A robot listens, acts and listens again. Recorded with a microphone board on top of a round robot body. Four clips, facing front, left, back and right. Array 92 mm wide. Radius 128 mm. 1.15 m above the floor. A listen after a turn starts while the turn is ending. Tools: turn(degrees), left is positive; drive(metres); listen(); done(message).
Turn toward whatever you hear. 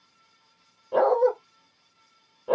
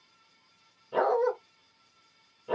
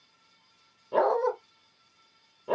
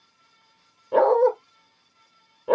turn(degrees=-95)
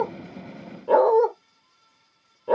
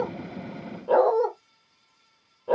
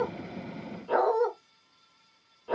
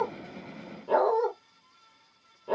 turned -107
turn(degrees=10)
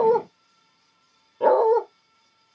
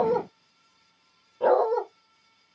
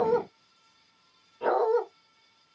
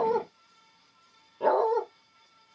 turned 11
done("Found it: a dog barking, straight ahead, 1 to 2 m away.")